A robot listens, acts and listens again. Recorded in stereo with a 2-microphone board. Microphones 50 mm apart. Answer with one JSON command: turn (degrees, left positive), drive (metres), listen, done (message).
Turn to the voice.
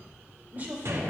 {"turn": -30}
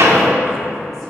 {"listen": true}
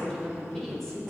{"turn": 10}
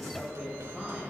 {"done": "Found it: a woman speaking, straight ahead, over 4 m away."}